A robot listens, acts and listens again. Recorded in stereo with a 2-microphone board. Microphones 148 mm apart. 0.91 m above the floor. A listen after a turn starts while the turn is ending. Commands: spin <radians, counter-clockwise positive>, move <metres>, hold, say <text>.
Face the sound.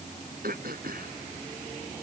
spin -1.57
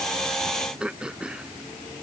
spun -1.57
say Found it: throat clearing, straight ahead.